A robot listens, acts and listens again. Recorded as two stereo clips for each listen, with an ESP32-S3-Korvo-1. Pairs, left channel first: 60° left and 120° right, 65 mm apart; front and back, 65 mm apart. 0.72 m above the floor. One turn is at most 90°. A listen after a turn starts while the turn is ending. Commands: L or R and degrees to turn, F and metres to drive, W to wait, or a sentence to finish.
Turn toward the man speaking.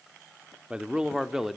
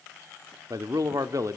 L90
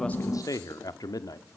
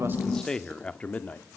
L60
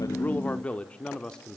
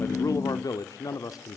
R20
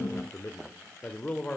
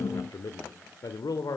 R15
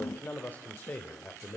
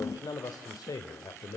Facing the man speaking.